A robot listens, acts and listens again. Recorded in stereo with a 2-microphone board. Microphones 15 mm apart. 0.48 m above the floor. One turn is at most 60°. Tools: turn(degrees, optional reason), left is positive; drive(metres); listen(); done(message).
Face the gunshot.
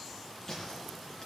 turn(degrees=30, reason="The gunshot: about 30° left or 150° left.")
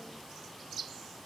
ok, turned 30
listen()
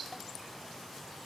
done("I heard a gunshot, but can't make it out now. It was about straight ahead or 120° left.")